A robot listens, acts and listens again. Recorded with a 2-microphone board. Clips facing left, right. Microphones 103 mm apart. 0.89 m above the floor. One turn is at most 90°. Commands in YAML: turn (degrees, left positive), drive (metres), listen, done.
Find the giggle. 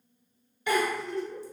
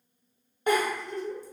turn: -45
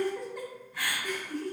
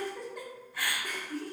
done: "Found it: a giggle, straight ahead, 1 to 2 m away."